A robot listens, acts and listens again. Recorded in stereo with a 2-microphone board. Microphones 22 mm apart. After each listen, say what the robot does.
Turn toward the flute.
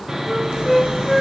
Turn 15° right.
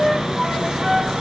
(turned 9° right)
Turn 30° right.
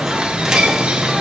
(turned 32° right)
Keep listening.
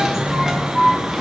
Turn 25° left.
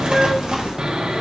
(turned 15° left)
Turn 10° left.
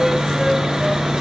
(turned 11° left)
Keep listening.
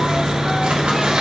Facing where the flute came from. I can't hear it now.